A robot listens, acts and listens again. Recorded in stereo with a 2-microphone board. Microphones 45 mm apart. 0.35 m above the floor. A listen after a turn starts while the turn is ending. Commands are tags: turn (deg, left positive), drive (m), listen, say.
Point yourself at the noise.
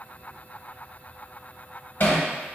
<turn deg="55"/>
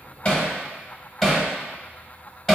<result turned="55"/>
<turn deg="10"/>
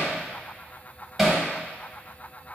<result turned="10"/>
<say>Found it: hammering, straight ahead.</say>